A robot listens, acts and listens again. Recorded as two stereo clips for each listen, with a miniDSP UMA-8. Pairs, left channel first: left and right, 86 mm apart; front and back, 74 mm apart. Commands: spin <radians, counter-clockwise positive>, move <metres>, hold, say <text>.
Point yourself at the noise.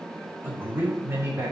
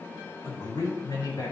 spin -0.52
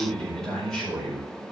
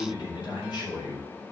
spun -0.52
say Facing the man speaking.